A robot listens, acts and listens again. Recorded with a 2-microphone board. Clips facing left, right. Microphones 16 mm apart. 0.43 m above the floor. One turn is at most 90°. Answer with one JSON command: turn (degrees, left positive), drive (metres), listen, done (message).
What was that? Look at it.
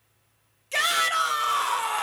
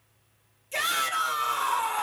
{"turn": 45}
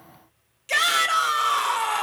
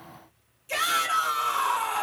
{"turn": 75}
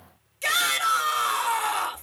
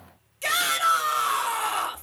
{"done": "Found it: a shout, straight ahead, 1 to 2 m away."}